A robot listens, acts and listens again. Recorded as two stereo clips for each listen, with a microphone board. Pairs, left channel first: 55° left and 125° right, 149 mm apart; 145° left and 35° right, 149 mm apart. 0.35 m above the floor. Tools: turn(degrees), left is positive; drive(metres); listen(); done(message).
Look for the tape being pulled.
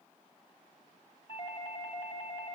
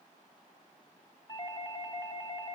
listen()
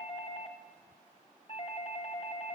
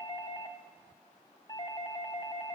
listen()
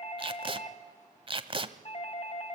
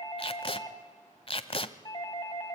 turn(degrees=-170)
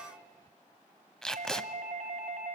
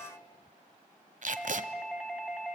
turn(degrees=-30)
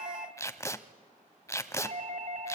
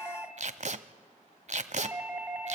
turn(degrees=-10)
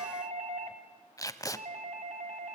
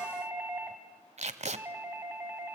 done("Facing the tape being pulled.")